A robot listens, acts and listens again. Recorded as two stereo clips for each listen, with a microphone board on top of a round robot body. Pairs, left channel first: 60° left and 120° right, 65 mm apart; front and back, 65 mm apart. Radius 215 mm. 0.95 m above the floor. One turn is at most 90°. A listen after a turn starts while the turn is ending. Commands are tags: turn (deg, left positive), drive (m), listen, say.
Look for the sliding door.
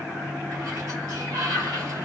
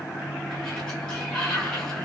<turn deg="-80"/>
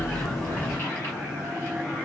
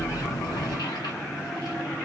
<listen/>
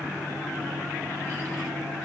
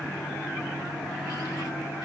<listen/>
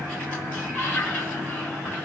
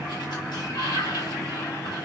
<say>Facing the sliding door, under 1 m away.</say>